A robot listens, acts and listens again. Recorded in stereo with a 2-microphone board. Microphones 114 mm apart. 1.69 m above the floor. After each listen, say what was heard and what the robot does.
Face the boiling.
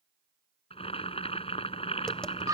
The boiling: about 55° left or 125° left. Turn 55° left.
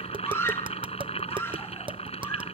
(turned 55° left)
So it is at 65° left. Turn 65° left.
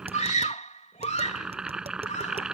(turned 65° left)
Found it: boiling, straight ahead.